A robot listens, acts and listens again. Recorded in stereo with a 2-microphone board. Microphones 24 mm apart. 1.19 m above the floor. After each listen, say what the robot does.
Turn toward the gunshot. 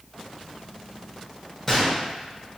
Turn 30° left.
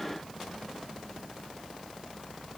Keep listening.
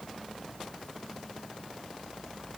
I heard a gunshot, but can't make it out now. It was about 20° right or 140° left.